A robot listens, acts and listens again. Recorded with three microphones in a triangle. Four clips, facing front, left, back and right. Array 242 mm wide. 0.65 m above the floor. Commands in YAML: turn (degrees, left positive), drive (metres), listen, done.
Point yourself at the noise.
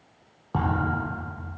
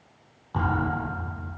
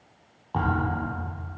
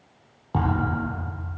turn: -45
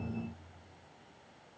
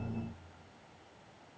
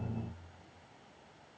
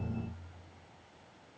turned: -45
done: "Facing where the thud came from. I can't hear it now."